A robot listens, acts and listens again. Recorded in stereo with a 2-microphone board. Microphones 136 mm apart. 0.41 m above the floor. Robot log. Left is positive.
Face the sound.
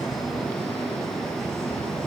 cmd idle
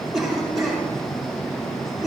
cmd yaw +30
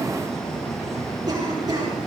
cmd idle
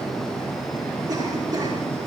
cmd idle
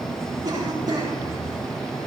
note: So it is at 30° right.
cmd yaw -30
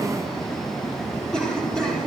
end: Facing the cough.